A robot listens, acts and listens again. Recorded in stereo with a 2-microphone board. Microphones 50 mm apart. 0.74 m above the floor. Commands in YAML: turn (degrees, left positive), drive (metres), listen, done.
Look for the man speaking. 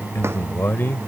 turn: 45
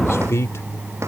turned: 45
turn: 75
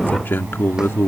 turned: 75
turn: 55
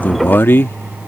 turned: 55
turn: 55
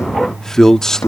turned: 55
turn: 10
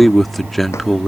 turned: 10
done: "Facing the man speaking."